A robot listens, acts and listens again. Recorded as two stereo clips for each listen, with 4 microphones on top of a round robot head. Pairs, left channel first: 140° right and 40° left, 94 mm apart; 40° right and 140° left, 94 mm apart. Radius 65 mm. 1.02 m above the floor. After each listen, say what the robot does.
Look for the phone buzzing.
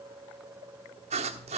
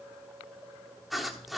Keep listening.
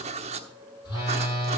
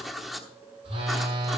Turn 165° left.
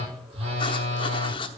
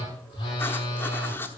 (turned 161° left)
Found it: a phone buzzing, straight ahead, over 4 m away.